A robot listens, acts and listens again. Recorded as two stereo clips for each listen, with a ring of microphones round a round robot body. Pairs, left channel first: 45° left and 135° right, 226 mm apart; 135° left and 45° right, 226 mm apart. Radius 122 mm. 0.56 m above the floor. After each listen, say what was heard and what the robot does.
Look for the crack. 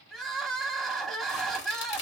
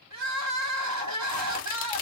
The crack: 85° left. Turn 85° left.
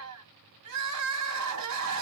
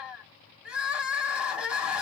Facing where the crack came from. I can't hear it now.